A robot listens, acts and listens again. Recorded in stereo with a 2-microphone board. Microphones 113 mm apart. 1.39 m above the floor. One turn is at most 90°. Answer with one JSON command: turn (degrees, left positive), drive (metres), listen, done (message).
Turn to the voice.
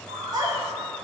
{"turn": -35}
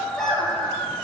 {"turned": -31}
{"done": "Found it: a child speaking, straight ahead, 2 to 4 m away."}